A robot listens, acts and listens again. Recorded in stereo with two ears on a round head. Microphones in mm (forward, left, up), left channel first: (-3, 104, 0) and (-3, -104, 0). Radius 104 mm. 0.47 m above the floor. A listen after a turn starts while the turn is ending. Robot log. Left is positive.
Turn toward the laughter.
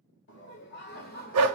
note: The laughter: about 40° left or 140° left.
cmd yaw +40
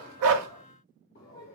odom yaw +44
note: The laughter: about 40° left or 140° left.
cmd yaw +40
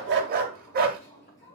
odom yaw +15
note: The laughter: about 35° left or 145° left.
cmd yaw +35
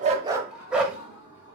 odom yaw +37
note: So it is at 125° left.
cmd yaw +125
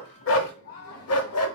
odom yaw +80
note: The laughter is now 40° left.
cmd yaw +40
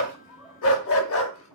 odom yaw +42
end: Facing the laughter, 2 to 4 m away.